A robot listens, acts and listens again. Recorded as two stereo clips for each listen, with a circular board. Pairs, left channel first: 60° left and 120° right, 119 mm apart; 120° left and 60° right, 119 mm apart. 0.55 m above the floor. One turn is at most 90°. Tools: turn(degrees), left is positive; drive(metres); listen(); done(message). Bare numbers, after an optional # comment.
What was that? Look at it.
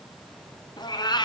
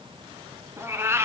# The cat meowing: 10° left.
turn(10)
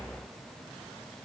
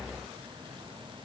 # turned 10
listen()
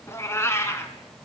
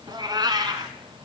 done("Facing the cat meowing, 1 to 2 m away.")